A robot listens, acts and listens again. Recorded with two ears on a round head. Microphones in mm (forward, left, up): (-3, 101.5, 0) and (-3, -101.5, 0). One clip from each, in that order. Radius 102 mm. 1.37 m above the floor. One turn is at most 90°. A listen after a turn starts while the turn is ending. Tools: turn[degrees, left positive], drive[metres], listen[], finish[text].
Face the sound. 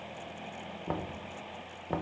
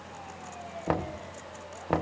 Action: turn[-90]
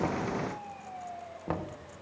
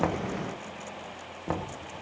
Action: finish[Found it: knocking, straight ahead.]